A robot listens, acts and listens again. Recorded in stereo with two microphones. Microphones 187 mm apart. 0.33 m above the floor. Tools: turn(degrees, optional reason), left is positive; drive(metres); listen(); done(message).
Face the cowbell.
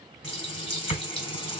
listen()
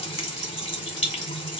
listen()
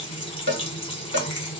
turn(degrees=-90)
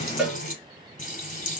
done("Facing the cowbell.")